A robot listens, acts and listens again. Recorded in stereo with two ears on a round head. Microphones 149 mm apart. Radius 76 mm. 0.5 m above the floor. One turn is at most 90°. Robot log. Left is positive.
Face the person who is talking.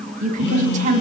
note: The woman speaking: about 50° right or 130° right.
cmd yaw -50
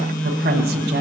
cmd idle
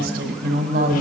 note: So it is at 75° right.
cmd yaw -75
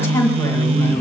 note: The woman speaking is now 20° left.
cmd yaw +20
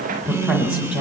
end: Facing the woman speaking.